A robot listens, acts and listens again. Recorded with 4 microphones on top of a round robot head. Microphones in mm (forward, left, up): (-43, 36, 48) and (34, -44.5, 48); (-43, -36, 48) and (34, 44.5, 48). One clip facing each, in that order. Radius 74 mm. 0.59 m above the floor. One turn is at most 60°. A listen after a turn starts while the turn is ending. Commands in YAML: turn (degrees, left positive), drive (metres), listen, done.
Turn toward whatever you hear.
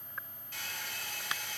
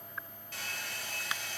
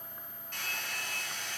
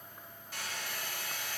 turn: -35
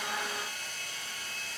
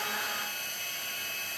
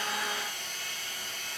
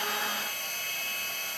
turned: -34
done: "Found it: a hair dryer, straight ahead, 2 to 4 m away."